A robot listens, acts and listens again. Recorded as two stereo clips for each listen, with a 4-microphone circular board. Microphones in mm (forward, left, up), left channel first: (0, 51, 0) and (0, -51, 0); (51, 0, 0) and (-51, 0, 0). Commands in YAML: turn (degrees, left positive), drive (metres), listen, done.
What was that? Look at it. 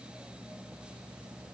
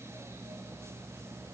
listen: true
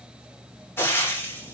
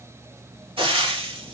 turn: 155
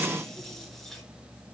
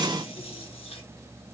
listen: true
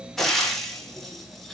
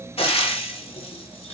done: "Found it: frying, straight ahead, 1 to 2 m away."